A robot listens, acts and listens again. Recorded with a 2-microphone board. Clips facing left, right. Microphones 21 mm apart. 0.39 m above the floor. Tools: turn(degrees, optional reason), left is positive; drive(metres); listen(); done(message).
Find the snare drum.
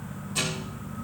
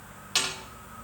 turn(degrees=-70, reason="The snare drum: about 70° right or 110° right.")
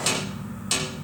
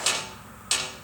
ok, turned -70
done("Facing the snare drum, over 4 m away.")